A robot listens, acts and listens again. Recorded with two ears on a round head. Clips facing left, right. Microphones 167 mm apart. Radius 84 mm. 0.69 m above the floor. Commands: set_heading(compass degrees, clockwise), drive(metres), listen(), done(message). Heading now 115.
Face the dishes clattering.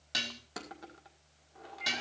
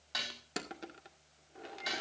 set_heading(80)
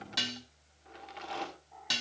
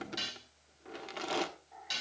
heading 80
set_heading(335)
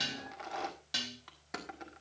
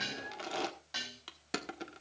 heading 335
set_heading(295)
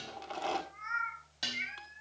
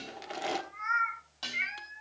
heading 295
set_heading(280)
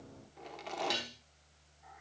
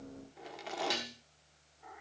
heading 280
done("Facing the dishes clattering, 2 to 4 m away.")